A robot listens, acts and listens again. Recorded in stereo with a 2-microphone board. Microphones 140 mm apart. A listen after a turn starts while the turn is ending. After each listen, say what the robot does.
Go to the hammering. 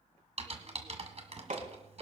Turn 75° right.
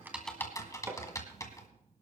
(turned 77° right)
Turn 20° right.
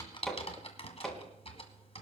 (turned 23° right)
Drive 1.0 m forward.
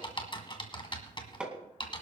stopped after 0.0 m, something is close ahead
Turn 10° right.
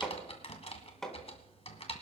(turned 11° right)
Something is in my way. I am facing the hammering but have not reached it.